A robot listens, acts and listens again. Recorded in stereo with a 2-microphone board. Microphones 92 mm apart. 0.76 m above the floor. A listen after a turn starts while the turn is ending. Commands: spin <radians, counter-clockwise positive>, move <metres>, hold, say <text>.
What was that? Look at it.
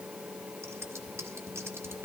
spin -0.52
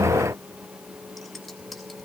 say Found it: scissors, straight ahead.